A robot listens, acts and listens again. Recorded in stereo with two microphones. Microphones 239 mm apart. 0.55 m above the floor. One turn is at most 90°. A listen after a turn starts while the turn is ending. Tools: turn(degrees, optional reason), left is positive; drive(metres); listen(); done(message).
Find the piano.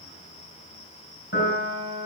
turn(degrees=55, reason="The piano: about 55° left or 125° left.")
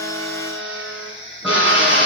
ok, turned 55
listen()
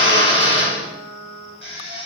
done("Facing the piano.")